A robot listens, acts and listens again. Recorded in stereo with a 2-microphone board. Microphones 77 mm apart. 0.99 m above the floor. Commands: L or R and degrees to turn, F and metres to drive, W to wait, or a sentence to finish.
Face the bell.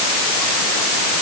W
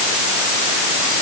W
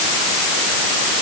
I can't make out a bell.